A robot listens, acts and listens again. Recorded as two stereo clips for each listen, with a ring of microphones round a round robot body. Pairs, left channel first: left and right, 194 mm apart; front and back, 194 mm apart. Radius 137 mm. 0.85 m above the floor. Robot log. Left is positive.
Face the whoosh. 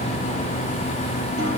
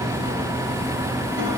cmd idle
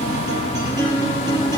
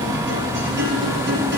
cmd idle
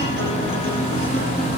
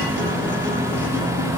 end: I can't make out a whoosh to turn to.